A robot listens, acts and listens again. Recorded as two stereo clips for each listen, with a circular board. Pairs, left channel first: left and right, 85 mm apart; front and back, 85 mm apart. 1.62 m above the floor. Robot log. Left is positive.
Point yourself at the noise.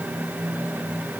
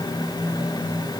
cmd idle
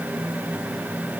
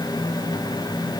cmd idle
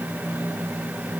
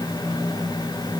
end: I can't make out anything.